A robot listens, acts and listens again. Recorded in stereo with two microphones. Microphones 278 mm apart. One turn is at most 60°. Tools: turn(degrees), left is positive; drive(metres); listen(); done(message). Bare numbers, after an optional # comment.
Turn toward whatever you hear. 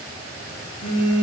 # The phone buzzing: about 60° left or 120° left.
turn(60)
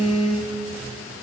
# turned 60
done("Found it: a phone buzzing, straight ahead.")